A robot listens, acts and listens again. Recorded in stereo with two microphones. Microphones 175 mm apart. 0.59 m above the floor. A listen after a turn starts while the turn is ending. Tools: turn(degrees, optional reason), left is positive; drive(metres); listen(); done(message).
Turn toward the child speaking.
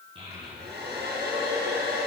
turn(degrees=-30, reason="The child speaking: about 30° right or 150° right.")
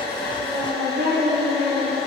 turn(degrees=-115, reason="So it is at 115° right.")
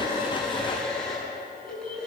turn(degrees=-30, reason="The child speaking is now 30° right.")
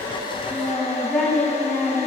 done("Facing the child speaking.")